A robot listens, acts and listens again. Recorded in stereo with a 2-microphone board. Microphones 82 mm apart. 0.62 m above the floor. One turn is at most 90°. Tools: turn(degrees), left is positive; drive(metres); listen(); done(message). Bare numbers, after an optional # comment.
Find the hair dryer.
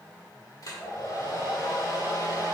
# The hair dryer: about 50° left or 130° left.
turn(50)
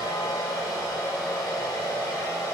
# So it is at 70° left.
turn(70)
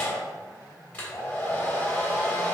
# The hair dryer is now 30° left.
turn(30)
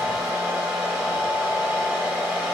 done("Facing the hair dryer, 1 to 2 m away.")